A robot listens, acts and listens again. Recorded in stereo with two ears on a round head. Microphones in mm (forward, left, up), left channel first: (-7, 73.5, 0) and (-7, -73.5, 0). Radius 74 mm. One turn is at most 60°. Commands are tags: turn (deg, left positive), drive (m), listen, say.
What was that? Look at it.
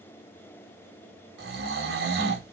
<turn deg="-60"/>
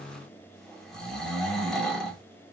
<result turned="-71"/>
<say>Facing the snoring.</say>